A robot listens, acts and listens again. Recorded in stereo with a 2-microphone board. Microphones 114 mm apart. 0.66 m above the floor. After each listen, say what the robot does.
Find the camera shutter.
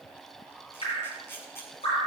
Turn 20° left.
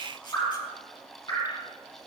Keep listening.
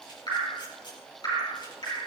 Keep listening.
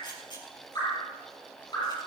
Turn 140° left.
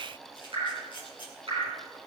Turn 45° left.
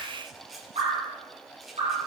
Found it: a camera shutter, straight ahead.